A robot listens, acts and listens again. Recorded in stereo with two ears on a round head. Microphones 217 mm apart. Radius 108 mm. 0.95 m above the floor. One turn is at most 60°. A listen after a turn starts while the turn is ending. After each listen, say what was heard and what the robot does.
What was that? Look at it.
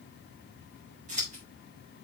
The scissors: about 35° right or 145° right. Turn 35° right.
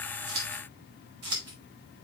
So it is at 110° right. Turn 60° right.
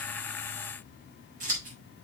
The scissors is now 35° right. Turn 35° right.
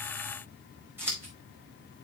The scissors is now 10° right. Turn 10° right.
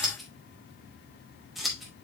Found it: scissors, straight ahead.